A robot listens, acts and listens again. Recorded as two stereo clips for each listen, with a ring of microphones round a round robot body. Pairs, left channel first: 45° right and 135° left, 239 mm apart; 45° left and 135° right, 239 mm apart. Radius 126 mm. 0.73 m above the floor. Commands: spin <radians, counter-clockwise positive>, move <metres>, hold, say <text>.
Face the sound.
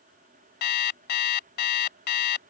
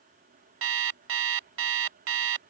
spin -1.66
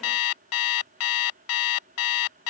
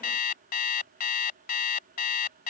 spin -0.17
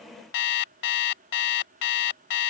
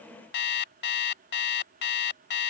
say Found it: an alarm clock, straight ahead.